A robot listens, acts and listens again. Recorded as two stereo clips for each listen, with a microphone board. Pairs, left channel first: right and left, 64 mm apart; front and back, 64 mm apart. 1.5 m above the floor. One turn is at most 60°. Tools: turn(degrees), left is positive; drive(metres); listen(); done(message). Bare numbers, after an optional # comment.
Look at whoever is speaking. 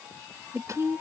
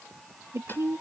# The woman speaking: 140° left.
turn(60)
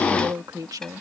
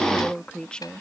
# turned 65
# The woman speaking is now 75° left.
turn(60)
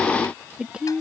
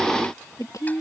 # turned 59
# The woman speaking is now 15° left.
turn(15)
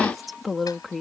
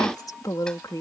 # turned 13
done("Facing the woman speaking.")